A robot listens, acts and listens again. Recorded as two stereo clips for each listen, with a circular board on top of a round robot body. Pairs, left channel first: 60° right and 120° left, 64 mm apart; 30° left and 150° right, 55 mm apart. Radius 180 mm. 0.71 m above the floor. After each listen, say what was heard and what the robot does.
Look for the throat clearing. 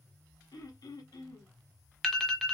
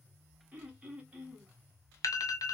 The throat clearing: 85° right. Turn 85° right.
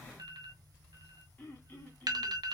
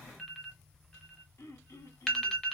Found it: throat clearing, straight ahead.